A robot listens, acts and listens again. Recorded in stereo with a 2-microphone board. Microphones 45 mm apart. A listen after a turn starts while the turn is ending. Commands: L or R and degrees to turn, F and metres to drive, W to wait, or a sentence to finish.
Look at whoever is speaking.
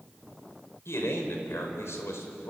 L75
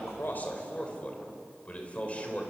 L30
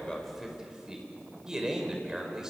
R10
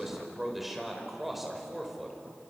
Facing the man speaking.